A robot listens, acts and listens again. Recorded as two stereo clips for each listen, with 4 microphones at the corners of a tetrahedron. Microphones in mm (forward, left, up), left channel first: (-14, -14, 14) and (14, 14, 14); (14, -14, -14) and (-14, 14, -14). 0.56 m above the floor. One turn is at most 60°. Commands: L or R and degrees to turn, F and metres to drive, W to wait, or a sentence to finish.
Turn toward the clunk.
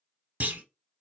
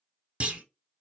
L60
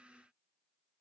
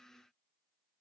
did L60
L25
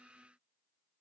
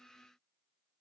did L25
Facing where the clunk came from. I can't hear it now.